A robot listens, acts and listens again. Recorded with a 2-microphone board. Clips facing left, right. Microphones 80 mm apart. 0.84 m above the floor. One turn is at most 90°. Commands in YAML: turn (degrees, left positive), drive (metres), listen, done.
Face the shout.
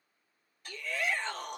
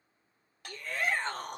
turn: -40
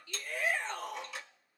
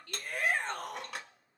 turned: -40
turn: -90
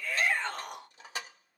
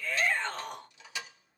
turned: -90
done: "Facing the shout."